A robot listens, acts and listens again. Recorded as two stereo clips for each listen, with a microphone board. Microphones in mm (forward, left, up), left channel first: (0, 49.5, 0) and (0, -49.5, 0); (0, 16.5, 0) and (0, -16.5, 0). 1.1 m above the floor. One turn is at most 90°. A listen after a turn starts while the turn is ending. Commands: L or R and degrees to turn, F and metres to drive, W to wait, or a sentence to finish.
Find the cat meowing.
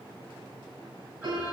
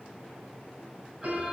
W
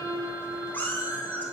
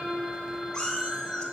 L20
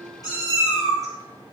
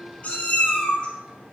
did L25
L90
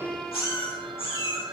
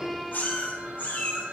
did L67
L75
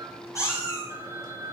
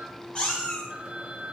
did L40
L35
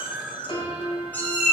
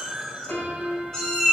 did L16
L20
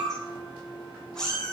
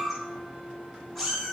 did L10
L10
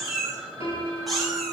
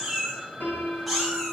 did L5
Found it: a cat meowing, straight ahead, over 4 m away.